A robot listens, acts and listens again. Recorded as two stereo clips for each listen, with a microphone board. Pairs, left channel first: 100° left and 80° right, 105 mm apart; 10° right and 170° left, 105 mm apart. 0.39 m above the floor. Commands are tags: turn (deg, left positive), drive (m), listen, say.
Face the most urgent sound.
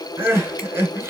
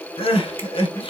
<turn deg="-15"/>
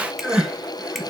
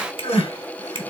<say>Found it: crying, straight ahead.</say>